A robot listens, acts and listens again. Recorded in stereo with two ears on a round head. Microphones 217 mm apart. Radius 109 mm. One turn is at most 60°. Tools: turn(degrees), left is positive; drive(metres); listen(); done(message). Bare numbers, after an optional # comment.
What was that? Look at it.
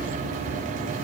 listen()
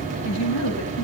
turn(60)
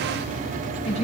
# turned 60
# So it is at 30° left.
turn(30)
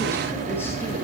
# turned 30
listen()
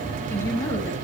# The woman speaking is now 10° left.
turn(10)
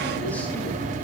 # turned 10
listen()
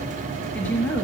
done("Found it: a woman speaking, straight ahead.")